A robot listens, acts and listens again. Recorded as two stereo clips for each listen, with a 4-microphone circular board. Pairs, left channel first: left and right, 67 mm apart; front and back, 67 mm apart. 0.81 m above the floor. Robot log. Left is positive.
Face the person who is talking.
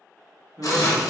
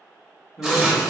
note: The man speaking: 65° right.
cmd yaw -65
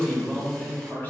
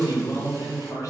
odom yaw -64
note: The man speaking is now 30° left.
cmd yaw +30
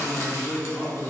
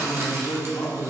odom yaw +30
note: The man speaking is now 20° left.
cmd yaw +20
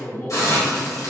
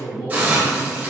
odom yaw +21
note: The man speaking is now 10° left.
cmd yaw +10
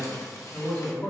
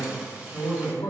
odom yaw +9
note: The man speaking is now 20° left.
cmd yaw +20
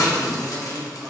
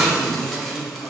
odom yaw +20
end: Facing the man speaking, 2 to 4 m away.